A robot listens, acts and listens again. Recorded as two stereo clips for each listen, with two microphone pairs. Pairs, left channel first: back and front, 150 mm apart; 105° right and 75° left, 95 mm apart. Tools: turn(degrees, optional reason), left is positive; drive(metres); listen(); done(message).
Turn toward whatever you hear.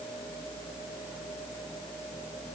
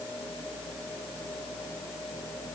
listen()
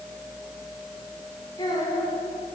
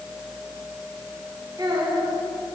turn(degrees=120, reason="The child speaking: 120° left.")
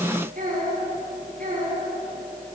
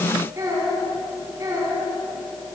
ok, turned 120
turn(degrees=20, reason="The child speaking is now 20° left.")
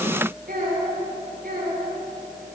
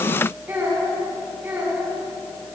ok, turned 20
done("Found it: a child speaking, straight ahead.")